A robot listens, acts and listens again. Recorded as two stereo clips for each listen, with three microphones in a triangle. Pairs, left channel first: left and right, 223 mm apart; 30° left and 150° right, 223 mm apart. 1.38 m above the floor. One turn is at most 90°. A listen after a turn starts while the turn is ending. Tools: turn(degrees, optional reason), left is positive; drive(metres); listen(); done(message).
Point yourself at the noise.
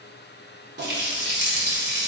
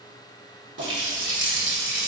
turn(degrees=-90, reason="The running tap: 125° right.")
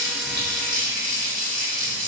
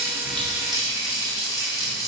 turn(degrees=-45, reason="The running tap is now 45° right.")
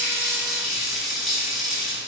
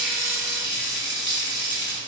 done("Found it: a running tap, straight ahead, under 1 m away.")